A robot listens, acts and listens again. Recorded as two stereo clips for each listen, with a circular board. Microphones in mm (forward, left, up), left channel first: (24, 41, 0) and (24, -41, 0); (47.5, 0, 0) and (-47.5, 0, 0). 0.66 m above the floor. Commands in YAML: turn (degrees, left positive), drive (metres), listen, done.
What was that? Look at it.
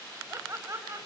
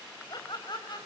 turn: -35
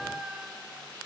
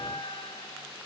turn: -10
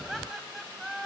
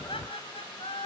done: "Found it: laughter, straight ahead."